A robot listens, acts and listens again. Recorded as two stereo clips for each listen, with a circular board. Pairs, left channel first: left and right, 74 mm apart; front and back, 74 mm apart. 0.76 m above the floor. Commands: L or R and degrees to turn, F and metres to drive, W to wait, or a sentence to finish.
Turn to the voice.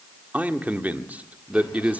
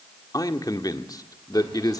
R25
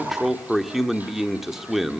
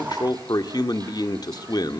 Facing the man speaking, 1 to 2 m away.